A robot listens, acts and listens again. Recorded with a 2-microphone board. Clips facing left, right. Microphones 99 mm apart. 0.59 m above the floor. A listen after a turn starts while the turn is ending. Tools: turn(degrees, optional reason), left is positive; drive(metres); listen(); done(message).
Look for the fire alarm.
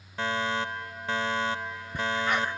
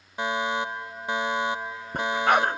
turn(degrees=-15, reason="The fire alarm: about 15° right or 165° right.")
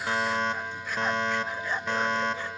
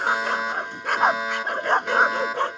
done("Facing the fire alarm.")